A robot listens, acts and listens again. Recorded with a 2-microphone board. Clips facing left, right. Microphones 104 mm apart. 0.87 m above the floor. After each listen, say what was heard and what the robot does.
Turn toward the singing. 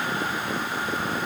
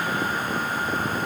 Keep listening.
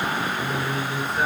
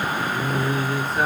The singing: about 65° right or 115° right. Turn 65° right.
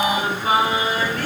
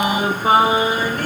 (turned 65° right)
So it is at 15° right. Turn 15° right.
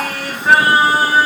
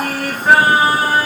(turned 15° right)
Facing the singing.